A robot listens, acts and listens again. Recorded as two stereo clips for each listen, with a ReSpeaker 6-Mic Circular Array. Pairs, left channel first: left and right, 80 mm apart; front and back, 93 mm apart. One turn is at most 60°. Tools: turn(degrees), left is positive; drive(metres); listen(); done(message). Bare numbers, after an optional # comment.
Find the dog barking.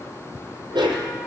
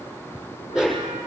# The dog barking: 95° right.
turn(-60)
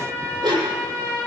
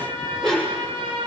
# The dog barking is now 80° right.
turn(-60)
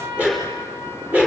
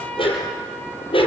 # The dog barking is now 15° right.
turn(-15)
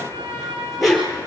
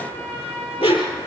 done("Found it: a dog barking, straight ahead.")